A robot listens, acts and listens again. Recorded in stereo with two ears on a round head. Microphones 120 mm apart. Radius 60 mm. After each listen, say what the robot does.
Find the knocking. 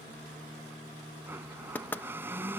Turn 30° left.
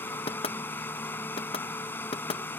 Turn 135° left.
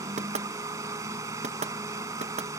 Turn 55° right.
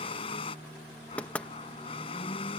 Turn 10° left.
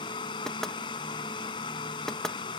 Facing the knocking.